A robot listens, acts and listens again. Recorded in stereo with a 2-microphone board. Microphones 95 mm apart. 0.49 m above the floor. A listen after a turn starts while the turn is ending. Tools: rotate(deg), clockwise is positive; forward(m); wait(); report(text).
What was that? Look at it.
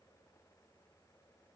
wait()
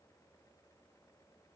wait()
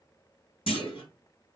rotate(-70)
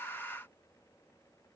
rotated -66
wait()
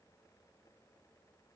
report("I heard a clunk, but can't make it out now. It was about straight ahead or 45° left.")